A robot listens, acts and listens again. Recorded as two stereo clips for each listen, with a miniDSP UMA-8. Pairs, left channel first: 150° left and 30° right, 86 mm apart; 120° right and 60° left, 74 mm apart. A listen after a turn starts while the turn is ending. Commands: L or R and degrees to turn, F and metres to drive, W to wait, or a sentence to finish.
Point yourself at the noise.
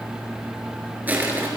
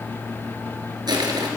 L40
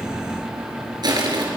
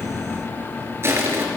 Found it: crushing, straight ahead, over 4 m away.